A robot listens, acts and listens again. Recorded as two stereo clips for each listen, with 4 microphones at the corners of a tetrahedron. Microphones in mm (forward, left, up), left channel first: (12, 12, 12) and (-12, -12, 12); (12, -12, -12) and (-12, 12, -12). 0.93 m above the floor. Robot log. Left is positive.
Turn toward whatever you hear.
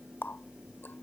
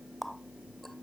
note: The running tap: 40° left.
cmd yaw +40
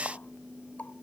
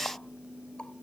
note: The running tap is now 10° left.
cmd yaw +10
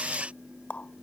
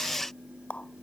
end: Found it: a running tap, straight ahead.